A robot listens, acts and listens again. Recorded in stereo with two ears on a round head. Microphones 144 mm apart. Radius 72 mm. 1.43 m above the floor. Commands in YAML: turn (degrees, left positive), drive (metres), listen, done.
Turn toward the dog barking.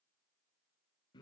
listen: true
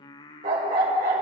turn: -55
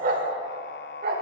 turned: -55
turn: -65
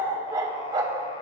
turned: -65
turn: -30
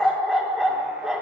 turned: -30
done: "Facing the dog barking."